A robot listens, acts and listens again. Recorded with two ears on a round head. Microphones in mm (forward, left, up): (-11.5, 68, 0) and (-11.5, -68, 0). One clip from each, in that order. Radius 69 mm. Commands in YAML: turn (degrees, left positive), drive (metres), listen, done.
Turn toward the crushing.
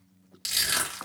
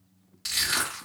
turn: 60
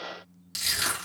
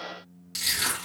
turn: 20
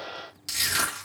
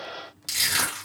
done: "Found it: crushing, straight ahead."